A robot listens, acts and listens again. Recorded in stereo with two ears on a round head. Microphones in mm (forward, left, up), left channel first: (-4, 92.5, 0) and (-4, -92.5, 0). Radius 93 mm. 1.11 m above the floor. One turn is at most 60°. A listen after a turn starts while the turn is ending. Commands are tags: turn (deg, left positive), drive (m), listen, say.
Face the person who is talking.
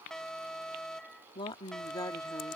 <turn deg="15"/>
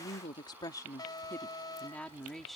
<turn deg="30"/>
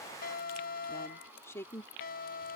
<turn deg="30"/>
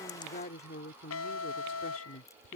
<turn deg="60"/>
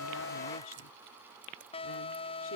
<turn deg="60"/>
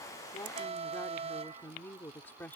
<turn deg="10"/>
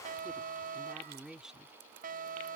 <say>Found it: a woman speaking, straight ahead.</say>